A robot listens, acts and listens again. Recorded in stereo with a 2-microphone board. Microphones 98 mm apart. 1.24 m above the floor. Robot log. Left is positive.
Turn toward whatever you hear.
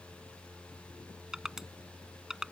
cmd yaw -30
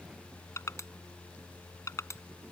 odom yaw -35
note: So it is at 30° left.
cmd yaw +30
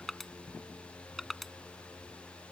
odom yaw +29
end: Found it: crushing, straight ahead.